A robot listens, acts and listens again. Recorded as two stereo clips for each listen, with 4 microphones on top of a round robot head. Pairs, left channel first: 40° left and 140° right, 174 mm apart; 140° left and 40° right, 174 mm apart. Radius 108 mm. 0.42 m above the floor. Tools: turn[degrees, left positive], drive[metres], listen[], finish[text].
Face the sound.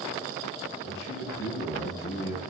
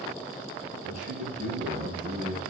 Thought: The man speaking: 10° left.
Action: turn[10]
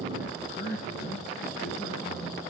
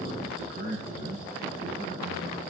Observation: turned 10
Action: finish[Facing the man speaking.]